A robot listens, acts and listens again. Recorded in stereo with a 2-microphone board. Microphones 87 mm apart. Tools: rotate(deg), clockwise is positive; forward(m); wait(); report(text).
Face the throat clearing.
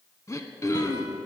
rotate(-35)
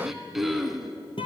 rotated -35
report("Facing the throat clearing, under 1 m away.")